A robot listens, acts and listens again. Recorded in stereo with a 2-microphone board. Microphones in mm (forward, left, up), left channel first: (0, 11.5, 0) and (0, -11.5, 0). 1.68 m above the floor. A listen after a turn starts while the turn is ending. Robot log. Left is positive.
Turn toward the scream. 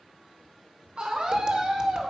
note: The scream: about 45° right or 135° right.
cmd yaw -45
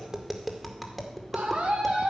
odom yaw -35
note: So it is at 100° right.
cmd yaw -100
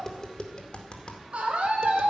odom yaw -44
note: The scream is now 55° right.
cmd yaw -55
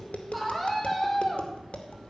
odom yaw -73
note: The scream is now 20° left.
cmd yaw +20
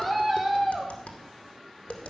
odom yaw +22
end: Found it: a scream, straight ahead, 2 to 4 m away.